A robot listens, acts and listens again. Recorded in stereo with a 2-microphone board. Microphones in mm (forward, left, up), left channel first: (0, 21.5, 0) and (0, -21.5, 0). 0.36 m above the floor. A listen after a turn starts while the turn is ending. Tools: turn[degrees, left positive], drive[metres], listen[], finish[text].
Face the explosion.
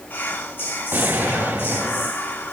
Thought: The explosion: about 55° right or 125° right.
Action: turn[-55]
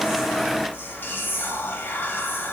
Action: listen[]
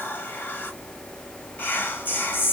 Action: finish[I heard an explosion, but can't make it out now. It was about straight ahead or 70° right.]